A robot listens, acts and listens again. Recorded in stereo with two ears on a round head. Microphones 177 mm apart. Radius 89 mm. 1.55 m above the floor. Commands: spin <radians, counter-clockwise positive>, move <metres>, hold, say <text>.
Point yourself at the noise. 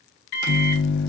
spin 1.05
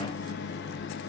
spin 1.05
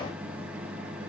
say Found it: a microwave, straight ahead, under 1 m away.